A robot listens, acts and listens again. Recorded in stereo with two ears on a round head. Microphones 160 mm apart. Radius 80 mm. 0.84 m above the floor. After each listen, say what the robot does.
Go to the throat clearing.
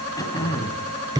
Turn 20° left.
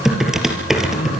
Keep listening.
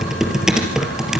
Keep listening.
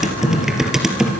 I heard throat clearing, but can't make it out now. It was about straight ahead or 140° left. I did not reach it.